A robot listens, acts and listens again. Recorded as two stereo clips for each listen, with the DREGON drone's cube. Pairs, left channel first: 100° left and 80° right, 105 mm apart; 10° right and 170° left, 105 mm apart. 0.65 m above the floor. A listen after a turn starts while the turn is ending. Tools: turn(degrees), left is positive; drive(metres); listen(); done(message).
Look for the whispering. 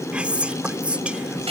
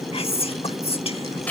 done("Found it: whispering, straight ahead.")